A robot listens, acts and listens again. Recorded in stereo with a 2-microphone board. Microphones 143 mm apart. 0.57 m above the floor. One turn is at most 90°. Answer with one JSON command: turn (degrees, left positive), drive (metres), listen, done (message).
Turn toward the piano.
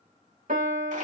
{"turn": -65}
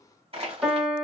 {"done": "Facing the piano, 1 to 2 m away."}